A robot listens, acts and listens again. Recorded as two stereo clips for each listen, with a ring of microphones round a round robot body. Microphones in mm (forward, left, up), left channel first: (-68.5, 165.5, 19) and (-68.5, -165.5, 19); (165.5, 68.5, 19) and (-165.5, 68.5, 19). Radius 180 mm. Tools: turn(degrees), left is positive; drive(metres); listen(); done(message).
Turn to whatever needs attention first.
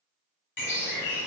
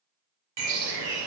listen()
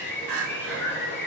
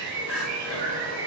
turn(degrees=-95)
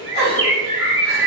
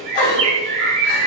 turn(degrees=-25)
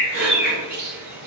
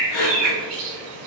turn(degrees=-30)
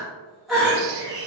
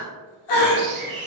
done("Facing the crying.")